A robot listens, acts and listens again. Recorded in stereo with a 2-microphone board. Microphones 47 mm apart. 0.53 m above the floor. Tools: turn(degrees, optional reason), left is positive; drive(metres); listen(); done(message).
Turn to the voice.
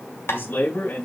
turn(degrees=50, reason="The man speaking: about 50° left or 130° left.")
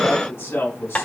turn(degrees=80, reason="So it is at 80° left.")
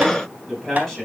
done("Facing the man speaking.")